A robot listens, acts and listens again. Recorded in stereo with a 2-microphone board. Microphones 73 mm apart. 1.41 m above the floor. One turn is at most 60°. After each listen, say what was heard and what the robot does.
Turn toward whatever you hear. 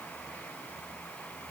Keep listening.
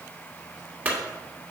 The clunk: about 20° right or 160° right. Turn 20° right.
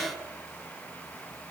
Keep listening.
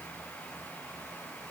I heard a clunk, but can't make it out now. It was about straight ahead or 140° right.